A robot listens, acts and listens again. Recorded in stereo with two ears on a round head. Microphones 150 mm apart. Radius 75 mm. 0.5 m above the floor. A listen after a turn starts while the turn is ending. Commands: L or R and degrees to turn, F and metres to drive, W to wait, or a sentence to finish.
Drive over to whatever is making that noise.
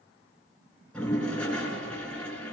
L30
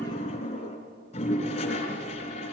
L140
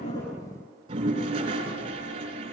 R35
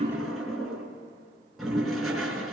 F1.0
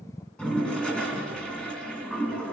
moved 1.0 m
F1.0
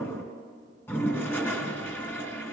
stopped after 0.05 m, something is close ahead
L15
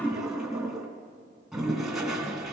Blocked. The toilet flushing is further on, straight ahead.